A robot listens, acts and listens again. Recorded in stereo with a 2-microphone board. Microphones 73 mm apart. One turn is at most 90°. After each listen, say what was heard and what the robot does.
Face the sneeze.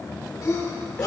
The sneeze: about 55° left or 125° left. Turn 55° left.
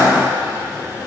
So it is at 70° left. Turn 70° left.
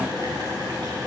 I heard a sneeze from this way, but can't make it out now.